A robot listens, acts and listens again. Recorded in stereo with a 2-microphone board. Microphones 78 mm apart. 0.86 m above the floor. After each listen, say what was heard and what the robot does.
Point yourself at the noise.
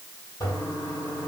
The toilet flushing: about 55° left or 125° left. Turn 55° left.
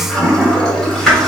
Found it: a toilet flushing, straight ahead, 1 to 2 m away.